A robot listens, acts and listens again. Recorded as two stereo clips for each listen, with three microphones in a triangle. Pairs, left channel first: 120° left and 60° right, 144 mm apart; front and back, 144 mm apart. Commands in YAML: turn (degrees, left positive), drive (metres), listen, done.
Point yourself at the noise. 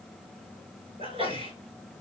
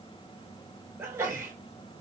turn: -110
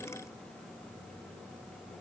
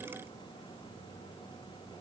done: "I heard a sneeze from this way, but can't make it out now."